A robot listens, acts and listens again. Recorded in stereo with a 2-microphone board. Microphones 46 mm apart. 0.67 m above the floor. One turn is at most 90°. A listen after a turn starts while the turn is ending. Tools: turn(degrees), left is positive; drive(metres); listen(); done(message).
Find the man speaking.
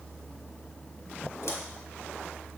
listen()
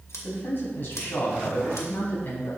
turn(degrees=45)
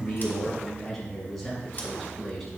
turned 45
done("Facing the man speaking.")